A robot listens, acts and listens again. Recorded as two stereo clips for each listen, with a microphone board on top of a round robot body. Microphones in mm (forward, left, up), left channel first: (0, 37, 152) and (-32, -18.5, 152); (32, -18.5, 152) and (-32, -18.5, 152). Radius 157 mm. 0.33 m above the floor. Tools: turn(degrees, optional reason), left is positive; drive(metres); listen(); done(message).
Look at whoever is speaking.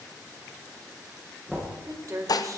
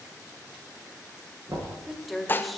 turn(degrees=-90, reason="The woman speaking: 90° right.")
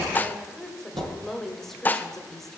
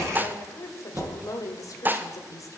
turn(degrees=-25, reason="The woman speaking is now 25° right.")
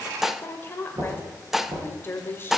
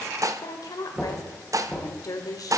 done("Found it: a woman speaking, straight ahead.")